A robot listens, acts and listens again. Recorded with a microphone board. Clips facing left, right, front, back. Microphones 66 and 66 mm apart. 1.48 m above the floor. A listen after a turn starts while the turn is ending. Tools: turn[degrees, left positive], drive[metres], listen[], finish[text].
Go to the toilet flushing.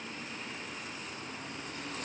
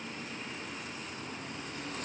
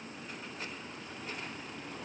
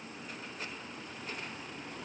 Action: listen[]
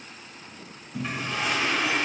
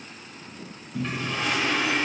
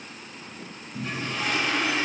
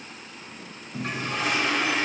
Thought: The toilet flushing: 170° left.
Action: turn[170]
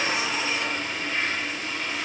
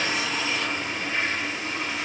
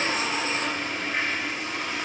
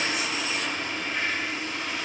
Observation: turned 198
Thought: The toilet flushing is now 30° right.
Action: turn[-30]
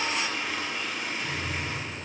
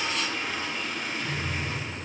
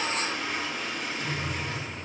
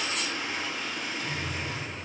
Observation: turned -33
Action: drive[1.0]
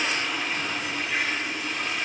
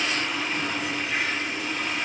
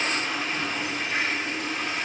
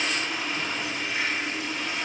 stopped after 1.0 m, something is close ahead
Action: finish[I am next to the toilet flushing.]